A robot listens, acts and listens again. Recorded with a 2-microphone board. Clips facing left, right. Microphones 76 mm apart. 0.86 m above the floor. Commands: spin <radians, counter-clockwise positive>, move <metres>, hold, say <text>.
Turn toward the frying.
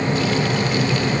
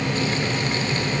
hold
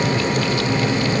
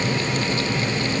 hold
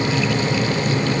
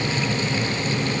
say I can't make out frying to turn to.